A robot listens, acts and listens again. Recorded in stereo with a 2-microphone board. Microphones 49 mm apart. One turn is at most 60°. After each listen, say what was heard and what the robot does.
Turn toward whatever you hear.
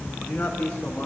The man speaking: about 20° left or 160° left. Turn 20° left.
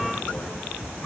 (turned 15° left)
Keep listening.
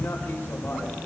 Keep listening.
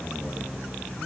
I heard a man speaking, but can't make it out now. It was about 5° left or 145° left.